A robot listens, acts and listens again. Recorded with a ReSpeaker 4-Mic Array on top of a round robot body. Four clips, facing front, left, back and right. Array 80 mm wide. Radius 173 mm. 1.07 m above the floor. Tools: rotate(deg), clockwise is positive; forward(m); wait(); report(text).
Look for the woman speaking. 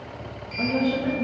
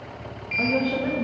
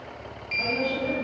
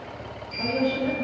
rotate(-75)
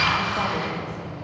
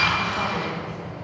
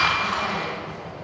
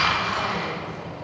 wait()
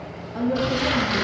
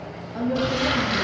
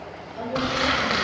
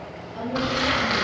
rotate(-40)
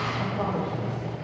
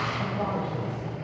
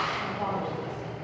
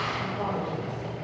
rotate(-15)
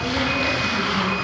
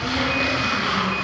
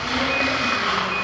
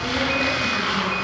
wait()
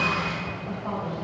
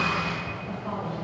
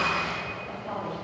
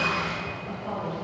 rotate(-10)
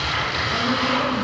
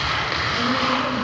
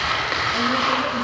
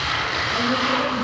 wait()
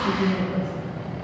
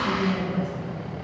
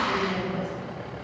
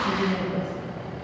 report("Facing the woman speaking, 2 to 4 m away.")